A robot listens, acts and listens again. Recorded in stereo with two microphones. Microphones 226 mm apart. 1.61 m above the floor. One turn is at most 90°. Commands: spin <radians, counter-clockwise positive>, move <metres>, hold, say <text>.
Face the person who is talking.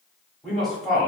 spin 0.52
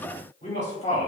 spin 1.57
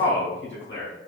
spin 0.96
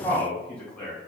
say Found it: a man speaking, straight ahead, 1 to 2 m away.